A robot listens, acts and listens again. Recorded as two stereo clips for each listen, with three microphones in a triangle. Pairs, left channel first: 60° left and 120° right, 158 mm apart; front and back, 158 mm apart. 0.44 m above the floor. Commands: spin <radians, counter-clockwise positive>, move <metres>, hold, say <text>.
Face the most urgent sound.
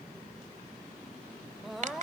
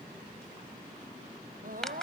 spin 2.62
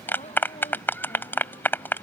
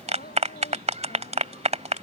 hold
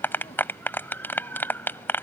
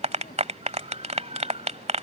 hold
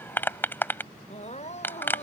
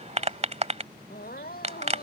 spin 0.26
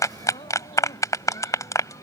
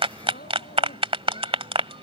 hold
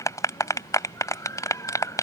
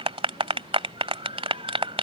hold
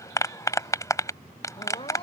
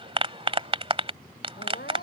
say Found it: crying, straight ahead.